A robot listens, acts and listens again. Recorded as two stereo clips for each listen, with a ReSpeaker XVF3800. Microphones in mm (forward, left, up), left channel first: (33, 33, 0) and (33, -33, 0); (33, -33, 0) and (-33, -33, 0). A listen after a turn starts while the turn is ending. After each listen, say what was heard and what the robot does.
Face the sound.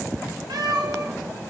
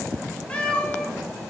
The cat meowing: 75° right. Turn 75° right.
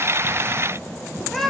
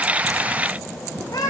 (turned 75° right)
Found it: a cat meowing, straight ahead.